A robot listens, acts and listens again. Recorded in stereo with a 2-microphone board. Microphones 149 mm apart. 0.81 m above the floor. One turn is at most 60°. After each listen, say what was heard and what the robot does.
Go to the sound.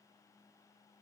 Keep listening.
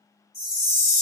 The chime: about 45° right or 135° right. Turn 45° right.
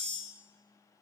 Keep listening.
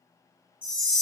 Drive 1.0 m forward.
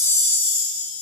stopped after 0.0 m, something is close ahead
Blocked. The chime is further on, straight ahead.